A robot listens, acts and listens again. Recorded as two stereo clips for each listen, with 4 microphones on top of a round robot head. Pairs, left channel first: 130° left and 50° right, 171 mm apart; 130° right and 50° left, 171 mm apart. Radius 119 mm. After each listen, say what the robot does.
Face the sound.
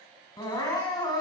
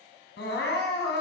Turn 160° right.
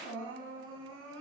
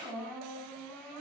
Turn 50° right.
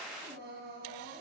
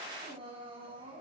Turn 15° right.
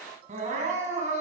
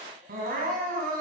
Found it: crying, straight ahead, 2 to 4 m away.